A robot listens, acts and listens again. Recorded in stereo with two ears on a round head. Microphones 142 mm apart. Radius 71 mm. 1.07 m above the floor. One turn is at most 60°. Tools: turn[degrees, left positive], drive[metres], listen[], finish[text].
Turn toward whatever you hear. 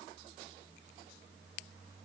Action: listen[]
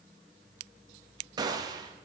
Thought: The gunshot: about 25° right or 155° right.
Action: turn[-25]
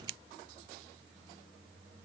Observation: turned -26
Action: listen[]
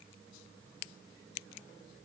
Action: finish[I heard a gunshot, but can't make it out now. It was about straight ahead or 130° right.]